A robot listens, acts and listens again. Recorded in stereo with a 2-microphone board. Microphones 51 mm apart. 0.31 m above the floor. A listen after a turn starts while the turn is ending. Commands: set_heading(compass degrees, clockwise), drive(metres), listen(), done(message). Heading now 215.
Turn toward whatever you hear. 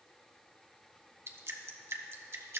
set_heading(270)
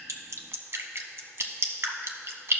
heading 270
set_heading(335)
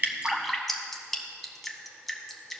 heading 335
done("Found it: dripping, straight ahead, under 1 m away.")